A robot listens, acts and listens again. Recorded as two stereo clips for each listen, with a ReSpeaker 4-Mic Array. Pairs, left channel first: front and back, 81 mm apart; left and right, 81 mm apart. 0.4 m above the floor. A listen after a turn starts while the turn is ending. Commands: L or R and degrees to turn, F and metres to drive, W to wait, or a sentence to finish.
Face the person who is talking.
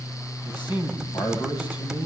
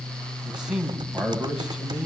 R10
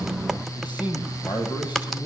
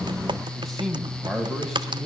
Facing the man speaking, 2 to 4 m away.